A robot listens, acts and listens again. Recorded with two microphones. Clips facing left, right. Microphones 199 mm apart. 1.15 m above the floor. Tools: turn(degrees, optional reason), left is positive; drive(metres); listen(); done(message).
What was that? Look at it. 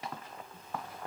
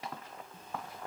listen()
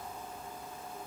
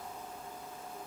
listen()
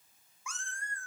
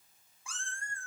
turn(degrees=-25, reason="The cat meowing: about 25° right or 155° right.")
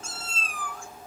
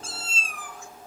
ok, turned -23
turn(degrees=-20, reason="The cat meowing: about 20° right or 160° right.")
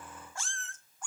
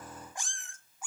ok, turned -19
turn(degrees=-30)
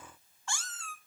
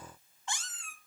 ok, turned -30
turn(degrees=-15, reason="The cat meowing: about 15° right or 165° right.")
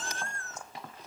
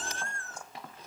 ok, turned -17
turn(degrees=-30, reason="The cat meowing: about 30° right or 150° right.")
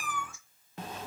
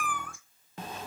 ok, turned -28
turn(degrees=-125, reason="So it is at 125° right.")
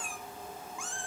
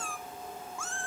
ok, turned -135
turn(degrees=15, reason="The cat meowing is now 15° left.")
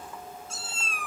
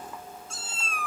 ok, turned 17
done("Found it: a cat meowing, straight ahead.")